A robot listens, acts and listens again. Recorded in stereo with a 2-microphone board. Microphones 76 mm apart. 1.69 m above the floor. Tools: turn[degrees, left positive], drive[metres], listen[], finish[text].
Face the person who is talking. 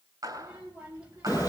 Thought: The child speaking: about 20° right or 160° right.
Action: turn[-20]
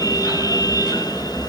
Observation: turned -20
Action: listen[]
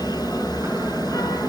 Action: listen[]
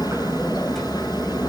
Action: finish[I heard a child speaking, but can't make it out now. It was about straight ahead or 140° right.]